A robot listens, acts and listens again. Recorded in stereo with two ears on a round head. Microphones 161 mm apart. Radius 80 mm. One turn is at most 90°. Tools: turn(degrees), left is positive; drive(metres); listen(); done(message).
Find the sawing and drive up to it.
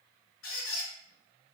listen()
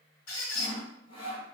turn(degrees=30)
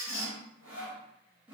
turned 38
drive(metres=1.0)
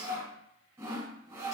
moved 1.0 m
turn(degrees=-15)
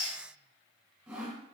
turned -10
drive(metres=1.0)
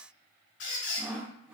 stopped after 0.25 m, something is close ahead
done("I am next to the sawing.")